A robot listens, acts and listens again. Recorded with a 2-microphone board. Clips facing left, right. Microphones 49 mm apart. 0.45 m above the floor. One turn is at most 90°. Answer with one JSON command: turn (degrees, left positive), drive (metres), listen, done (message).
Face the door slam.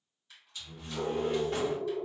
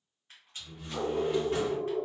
{"turn": -30}
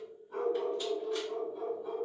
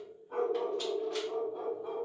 {"listen": true}
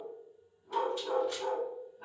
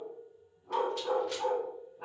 {"done": "I heard a door slam, but can't make it out now. It was about 25° left or 145° right."}